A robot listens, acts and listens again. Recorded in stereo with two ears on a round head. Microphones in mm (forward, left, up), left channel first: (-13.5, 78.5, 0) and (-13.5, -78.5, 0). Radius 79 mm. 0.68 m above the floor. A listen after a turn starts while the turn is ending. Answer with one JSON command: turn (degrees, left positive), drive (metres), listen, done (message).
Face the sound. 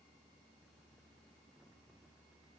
{"listen": true}
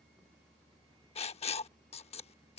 {"turn": 35}
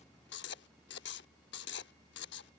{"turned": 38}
{"turn": 105}
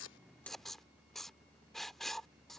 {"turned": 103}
{"done": "Found it: writing, straight ahead."}